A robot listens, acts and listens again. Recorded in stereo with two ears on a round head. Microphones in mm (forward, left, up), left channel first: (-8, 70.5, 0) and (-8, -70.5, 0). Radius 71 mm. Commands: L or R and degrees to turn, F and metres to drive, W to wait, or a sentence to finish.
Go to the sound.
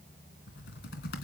L75
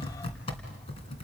L35
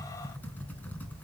L10
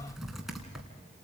F1.0
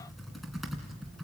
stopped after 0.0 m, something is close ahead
Blocked. The typing on a keyboard is further on, straight ahead.